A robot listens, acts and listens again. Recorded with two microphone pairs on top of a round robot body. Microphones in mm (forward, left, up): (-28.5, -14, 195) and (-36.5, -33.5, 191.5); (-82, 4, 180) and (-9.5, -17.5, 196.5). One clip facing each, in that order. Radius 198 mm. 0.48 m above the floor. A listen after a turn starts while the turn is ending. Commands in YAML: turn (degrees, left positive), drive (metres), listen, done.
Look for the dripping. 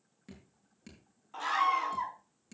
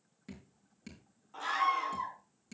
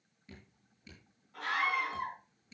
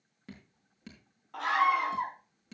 turn: -25
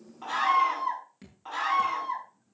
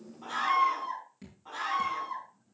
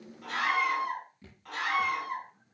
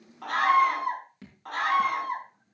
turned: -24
done: "Found it: dripping, straight ahead, over 4 m away."